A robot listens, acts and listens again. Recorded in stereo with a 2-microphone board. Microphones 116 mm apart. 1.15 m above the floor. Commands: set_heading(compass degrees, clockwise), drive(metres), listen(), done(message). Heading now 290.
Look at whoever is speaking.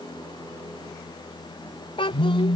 set_heading(240)
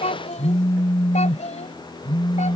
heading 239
set_heading(159)
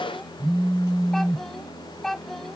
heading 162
done("Found it: a child speaking, straight ahead.")